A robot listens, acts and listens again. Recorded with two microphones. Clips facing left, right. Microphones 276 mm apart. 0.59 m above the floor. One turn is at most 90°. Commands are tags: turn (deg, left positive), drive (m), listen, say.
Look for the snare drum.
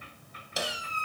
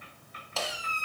<turn deg="15"/>
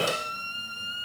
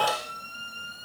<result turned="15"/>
<listen/>
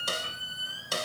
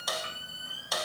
<turn deg="90"/>
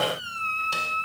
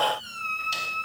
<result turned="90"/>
<turn deg="60"/>
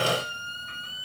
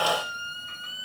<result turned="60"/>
<listen/>
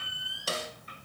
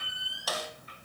<turn deg="30"/>
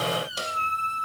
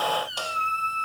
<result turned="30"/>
<listen/>
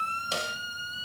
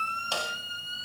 <turn deg="25"/>
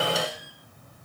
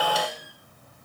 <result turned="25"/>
<listen/>
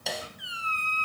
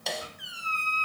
<say>Facing the snare drum, 2 to 4 m away.</say>